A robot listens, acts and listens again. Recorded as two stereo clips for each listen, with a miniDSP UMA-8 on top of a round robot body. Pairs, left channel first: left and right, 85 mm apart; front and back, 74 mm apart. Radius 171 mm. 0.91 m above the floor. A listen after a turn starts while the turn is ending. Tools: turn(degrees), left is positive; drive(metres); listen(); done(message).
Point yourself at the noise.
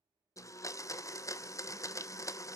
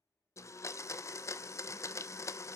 turn(degrees=45)
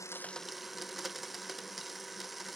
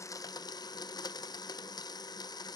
done("Found it: a blender, straight ahead, under 1 m away.")